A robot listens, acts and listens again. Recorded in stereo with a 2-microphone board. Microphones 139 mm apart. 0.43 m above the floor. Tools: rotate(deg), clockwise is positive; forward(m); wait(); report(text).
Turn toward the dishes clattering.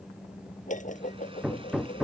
rotate(-65)
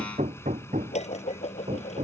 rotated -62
rotate(-55)
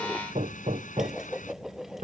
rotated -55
report("Facing the dishes clattering.")